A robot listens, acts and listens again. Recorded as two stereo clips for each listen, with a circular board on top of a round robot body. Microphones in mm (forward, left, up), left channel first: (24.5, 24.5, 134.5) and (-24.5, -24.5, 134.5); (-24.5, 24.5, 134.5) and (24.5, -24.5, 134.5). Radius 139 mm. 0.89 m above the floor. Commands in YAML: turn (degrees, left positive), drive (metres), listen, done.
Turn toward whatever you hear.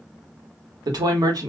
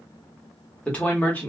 turn: -160
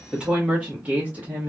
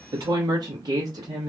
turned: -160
turn: -70
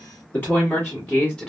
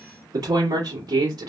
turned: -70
turn: -30
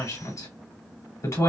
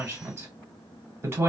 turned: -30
turn: 10
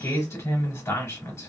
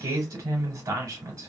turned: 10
done: "Found it: a woman speaking, straight ahead, 2 to 4 m away."